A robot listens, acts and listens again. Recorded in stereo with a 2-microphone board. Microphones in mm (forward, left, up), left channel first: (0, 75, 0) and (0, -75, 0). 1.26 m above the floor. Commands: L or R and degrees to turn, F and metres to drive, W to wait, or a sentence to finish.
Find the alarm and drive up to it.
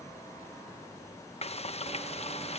W
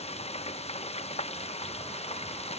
W
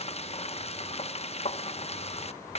I can't make out an alarm to turn to.